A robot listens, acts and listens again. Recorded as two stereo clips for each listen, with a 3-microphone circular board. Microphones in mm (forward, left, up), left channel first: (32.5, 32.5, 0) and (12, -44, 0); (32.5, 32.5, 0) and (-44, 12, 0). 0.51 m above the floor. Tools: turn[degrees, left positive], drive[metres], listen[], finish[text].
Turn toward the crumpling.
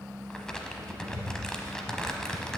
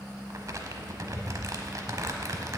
Thought: The crumpling: 155° left.
Action: turn[155]
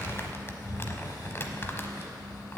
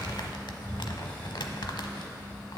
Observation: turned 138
Thought: The crumpling is now 15° left.
Action: turn[15]
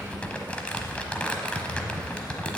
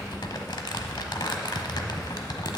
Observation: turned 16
Action: finish[Facing the crumpling.]